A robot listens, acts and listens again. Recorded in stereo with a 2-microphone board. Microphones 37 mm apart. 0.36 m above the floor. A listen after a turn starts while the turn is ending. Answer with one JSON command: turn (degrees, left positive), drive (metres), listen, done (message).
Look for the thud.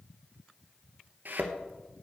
{"turn": -65}
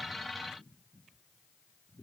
{"listen": true}
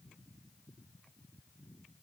{"done": "I heard a thud, but can't make it out now. It was about straight ahead or 50° right."}